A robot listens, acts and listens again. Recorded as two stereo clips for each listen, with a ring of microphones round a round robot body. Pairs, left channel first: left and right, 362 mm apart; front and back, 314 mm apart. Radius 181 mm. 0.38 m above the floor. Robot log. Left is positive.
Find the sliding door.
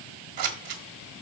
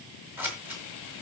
cmd idle
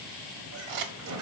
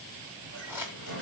note: The sliding door: 130° right.
cmd yaw -130
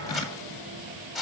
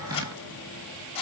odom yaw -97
note: Nothing new. It was at 35° right.
cmd yaw -35
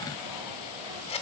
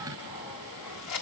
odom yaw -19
note: Nothing new. It was at 15° right.
cmd yaw -15
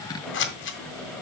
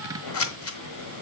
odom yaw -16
end: Facing the sliding door, 2 to 4 m away.